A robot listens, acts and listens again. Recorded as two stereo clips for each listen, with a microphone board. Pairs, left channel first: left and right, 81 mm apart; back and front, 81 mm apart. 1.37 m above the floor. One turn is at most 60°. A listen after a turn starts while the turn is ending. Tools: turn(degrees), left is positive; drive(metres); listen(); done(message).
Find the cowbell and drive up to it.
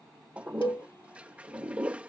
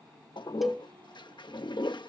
turn(degrees=60)
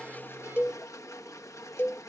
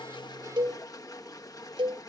turn(degrees=30)
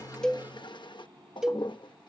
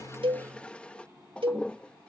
drive(metres=1.0)
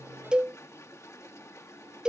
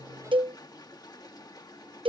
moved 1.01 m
turn(degrees=-10)
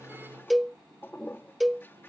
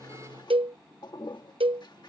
drive(metres=1.0)
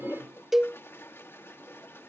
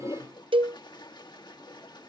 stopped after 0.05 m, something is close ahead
done("Arrived at the cowbell, straight ahead.")